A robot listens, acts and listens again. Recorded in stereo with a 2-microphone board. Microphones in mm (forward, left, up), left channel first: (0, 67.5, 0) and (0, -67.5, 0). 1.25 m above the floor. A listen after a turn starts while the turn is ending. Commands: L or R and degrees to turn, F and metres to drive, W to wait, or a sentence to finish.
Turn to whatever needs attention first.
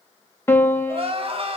R45
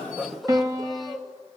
Found it: crying, straight ahead.